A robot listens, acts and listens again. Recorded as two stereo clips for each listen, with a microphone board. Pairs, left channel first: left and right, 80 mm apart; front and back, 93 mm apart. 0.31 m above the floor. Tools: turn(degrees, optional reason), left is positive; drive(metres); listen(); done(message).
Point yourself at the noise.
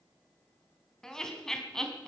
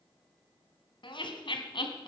turn(degrees=10, reason="The laughter: 10° left.")
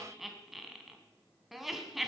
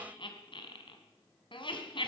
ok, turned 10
done("Facing the laughter, 2 to 4 m away.")